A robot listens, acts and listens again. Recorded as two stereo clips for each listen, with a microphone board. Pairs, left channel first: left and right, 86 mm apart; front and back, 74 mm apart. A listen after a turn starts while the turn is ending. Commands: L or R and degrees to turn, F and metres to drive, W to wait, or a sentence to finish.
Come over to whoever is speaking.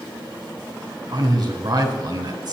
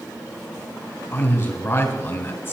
R60
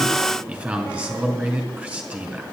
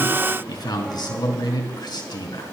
R20
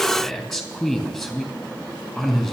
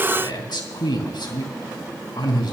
F1.0
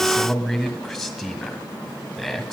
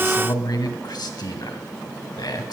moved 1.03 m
F1.0
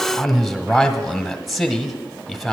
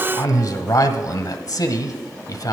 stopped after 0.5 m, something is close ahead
Arrived at the man speaking, straight ahead.